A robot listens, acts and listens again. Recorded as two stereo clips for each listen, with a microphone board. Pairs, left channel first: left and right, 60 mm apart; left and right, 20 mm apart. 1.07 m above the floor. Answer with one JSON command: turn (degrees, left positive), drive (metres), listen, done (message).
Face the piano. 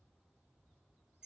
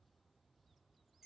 {"listen": true}
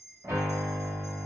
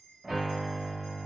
{"turn": -60}
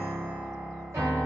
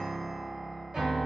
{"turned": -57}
{"turn": -55}
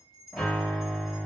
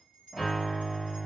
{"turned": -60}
{"done": "Found it: a piano, straight ahead, 1 to 2 m away."}